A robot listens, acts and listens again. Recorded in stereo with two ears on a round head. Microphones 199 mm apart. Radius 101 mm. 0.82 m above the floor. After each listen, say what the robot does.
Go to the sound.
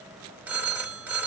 Turn 30° right.
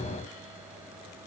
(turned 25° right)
Keep listening.
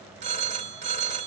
Turn 145° right.
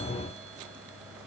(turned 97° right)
Turn 50° right.
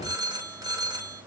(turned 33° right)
Turn 15° right.
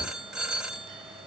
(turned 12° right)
Drive 1.0 m forward.
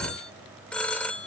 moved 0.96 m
Drive 1.0 m forward.
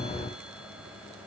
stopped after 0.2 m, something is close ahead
Keep listening.
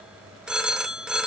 Arrived at the phone ringing, straight ahead.